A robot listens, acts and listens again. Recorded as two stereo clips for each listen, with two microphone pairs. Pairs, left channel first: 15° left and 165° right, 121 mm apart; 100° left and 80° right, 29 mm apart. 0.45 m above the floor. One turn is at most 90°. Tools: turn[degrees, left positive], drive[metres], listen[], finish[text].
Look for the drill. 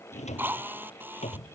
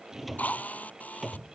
Thought: The drill: 125° left.
Action: turn[90]
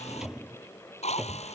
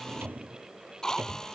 Thought: The drill is now 35° left.
Action: turn[35]
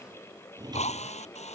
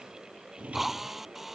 Action: finish[Facing the drill.]